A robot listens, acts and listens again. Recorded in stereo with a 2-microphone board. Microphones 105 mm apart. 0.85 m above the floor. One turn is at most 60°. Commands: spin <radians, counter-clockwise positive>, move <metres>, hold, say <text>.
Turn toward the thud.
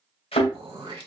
spin 1.05
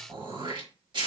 hold
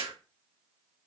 say I heard a thud, but can't make it out now. It was about 10° left or 50° left.